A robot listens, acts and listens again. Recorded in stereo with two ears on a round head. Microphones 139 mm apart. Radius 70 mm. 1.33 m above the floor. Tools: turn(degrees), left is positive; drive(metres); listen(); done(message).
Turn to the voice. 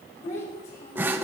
turn(degrees=55)
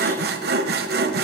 listen()
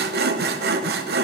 listen()
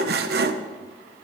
done("I heard a child speaking, but can't make it out now. It was about straight ahead or 70° left.")